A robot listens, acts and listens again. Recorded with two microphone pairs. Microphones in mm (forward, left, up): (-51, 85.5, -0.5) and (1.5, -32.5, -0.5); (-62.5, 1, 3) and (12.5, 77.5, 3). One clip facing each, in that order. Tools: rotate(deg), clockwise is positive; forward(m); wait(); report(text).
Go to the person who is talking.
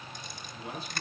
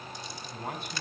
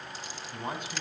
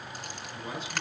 rotate(100)
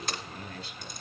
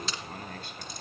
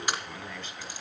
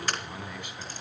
rotate(30)
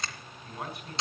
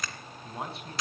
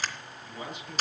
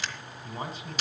forward(1.0)
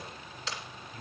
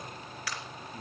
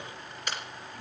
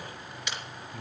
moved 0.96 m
forward(1.0)
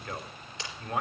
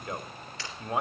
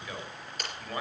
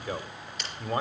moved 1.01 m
forward(1.0)
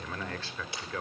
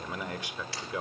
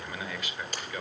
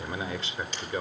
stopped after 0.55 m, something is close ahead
report("I am next to the man speaking.")